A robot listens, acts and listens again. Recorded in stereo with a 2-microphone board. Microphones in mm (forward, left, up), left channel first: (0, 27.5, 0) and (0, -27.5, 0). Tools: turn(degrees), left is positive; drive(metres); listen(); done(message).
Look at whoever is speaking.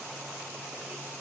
listen()
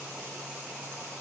listen()
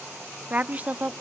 turn(degrees=-25)
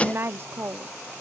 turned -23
turn(degrees=-125)
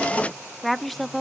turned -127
done("Found it: a woman speaking, straight ahead, under 1 m away.")